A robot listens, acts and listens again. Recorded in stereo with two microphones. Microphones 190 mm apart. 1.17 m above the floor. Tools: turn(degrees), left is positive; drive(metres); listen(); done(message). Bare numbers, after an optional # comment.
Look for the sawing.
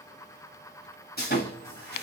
# The sawing: about 60° left or 120° left.
turn(60)
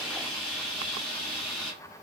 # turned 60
done("Found it: sawing, straight ahead.")